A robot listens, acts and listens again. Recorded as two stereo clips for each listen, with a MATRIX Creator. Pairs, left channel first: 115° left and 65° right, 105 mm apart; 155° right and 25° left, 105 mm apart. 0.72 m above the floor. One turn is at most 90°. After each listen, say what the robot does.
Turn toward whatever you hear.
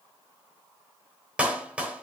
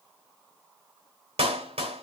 Turn 10° left.
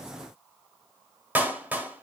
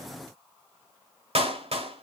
Facing the clap.